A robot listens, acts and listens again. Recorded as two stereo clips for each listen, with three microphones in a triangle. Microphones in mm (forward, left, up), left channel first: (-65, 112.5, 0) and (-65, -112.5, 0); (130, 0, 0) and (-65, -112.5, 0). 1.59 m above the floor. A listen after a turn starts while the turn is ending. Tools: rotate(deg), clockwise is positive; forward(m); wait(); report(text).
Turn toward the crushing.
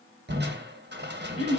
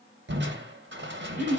rotate(125)
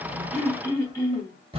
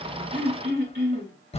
rotate(30)
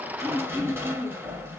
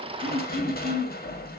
rotate(10)
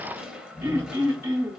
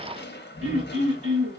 report("Facing the crushing.")